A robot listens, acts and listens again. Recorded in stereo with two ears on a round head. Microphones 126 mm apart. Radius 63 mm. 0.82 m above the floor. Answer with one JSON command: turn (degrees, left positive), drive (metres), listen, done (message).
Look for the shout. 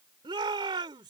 {"turn": -35}
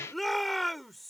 {"done": "Found it: a shout, straight ahead."}